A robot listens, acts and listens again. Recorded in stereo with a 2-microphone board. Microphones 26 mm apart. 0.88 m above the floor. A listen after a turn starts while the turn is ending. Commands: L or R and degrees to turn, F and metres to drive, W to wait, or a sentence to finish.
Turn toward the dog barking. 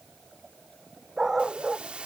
R25
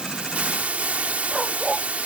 Found it: a dog barking, straight ahead.